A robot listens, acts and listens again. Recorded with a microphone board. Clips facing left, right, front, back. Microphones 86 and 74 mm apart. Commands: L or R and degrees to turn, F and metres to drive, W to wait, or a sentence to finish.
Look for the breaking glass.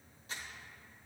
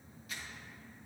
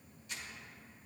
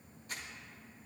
W
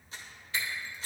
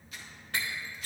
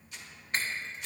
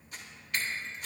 R60
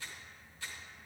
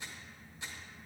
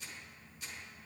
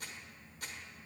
I heard breaking glass from this way, but can't make it out now.